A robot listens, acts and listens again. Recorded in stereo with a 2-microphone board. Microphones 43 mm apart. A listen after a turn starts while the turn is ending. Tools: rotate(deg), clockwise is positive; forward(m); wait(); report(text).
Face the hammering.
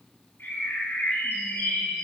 wait()
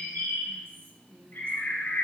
wait()
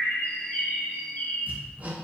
rotate(45)
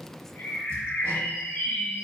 wait()
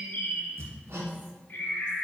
rotate(90)
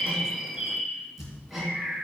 report("Facing the hammering, 2 to 4 m away.")